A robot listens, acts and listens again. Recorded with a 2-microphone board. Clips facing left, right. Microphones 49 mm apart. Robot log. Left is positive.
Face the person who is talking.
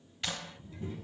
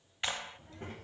note: The child speaking: about 55° right or 125° right.
cmd yaw -55
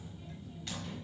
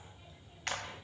note: So it is at 15° right.
cmd yaw -15
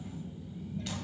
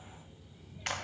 end: Found it: a child speaking, straight ahead, 1 to 2 m away.